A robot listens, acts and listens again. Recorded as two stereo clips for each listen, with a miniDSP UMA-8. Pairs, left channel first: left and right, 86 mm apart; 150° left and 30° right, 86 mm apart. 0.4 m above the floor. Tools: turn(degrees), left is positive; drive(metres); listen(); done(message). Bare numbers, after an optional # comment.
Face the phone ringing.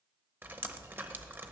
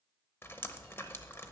listen()
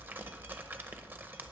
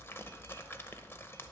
listen()
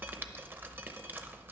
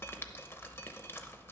done("I can't make out a phone ringing, only dripping.")